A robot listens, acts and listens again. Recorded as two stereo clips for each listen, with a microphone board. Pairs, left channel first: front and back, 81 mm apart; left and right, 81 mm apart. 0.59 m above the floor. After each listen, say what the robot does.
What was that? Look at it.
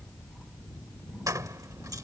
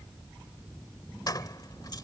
Turn 130° left.
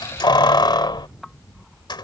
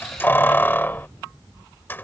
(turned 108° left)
Turn 25° left.
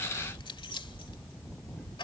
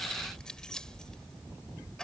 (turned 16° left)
Turn 10° left.
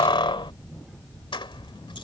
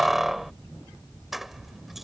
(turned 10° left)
Facing the keys jangling.